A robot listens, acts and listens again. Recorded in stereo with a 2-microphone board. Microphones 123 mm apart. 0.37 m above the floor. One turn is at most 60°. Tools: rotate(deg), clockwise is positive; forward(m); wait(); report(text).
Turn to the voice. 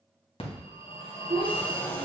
rotate(45)
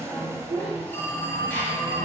rotate(60)
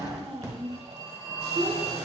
rotate(45)
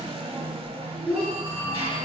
report("Facing the child speaking, 2 to 4 m away.")